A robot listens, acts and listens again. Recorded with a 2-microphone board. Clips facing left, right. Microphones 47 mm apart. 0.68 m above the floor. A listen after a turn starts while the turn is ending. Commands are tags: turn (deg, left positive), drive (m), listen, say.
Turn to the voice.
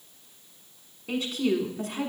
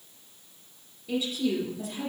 <turn deg="60"/>
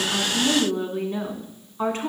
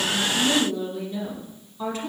<turn deg="45"/>
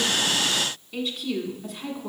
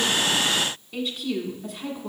<turn deg="-10"/>
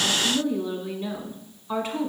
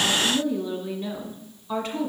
<say>Facing the woman speaking.</say>